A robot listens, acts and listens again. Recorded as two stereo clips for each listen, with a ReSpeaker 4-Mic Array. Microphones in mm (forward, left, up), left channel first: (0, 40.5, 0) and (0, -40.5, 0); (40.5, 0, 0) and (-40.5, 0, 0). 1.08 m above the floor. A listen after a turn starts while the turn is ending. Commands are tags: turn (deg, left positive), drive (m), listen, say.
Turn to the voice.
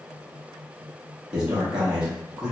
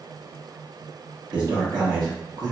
<turn deg="-165"/>
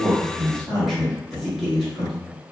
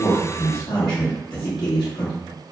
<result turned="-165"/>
<say>Found it: a man speaking, straight ahead, 1 to 2 m away.</say>